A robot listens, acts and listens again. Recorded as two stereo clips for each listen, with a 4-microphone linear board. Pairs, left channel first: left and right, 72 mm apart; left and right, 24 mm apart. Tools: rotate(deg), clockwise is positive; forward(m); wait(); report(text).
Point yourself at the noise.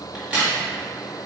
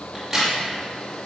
rotate(30)
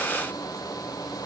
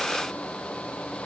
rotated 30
wait()
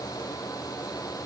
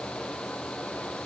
report("I heard a crack, but can't make it out now. It was about 15° left or 135° right.")